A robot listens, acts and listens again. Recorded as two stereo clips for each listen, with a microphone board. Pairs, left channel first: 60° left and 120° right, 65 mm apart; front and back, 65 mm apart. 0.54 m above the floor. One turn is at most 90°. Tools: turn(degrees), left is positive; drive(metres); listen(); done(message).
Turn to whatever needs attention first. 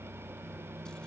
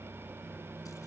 listen()
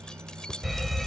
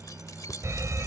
turn(degrees=90)
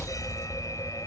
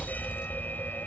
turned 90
turn(degrees=60)
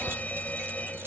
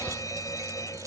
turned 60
done("Facing the fire alarm.")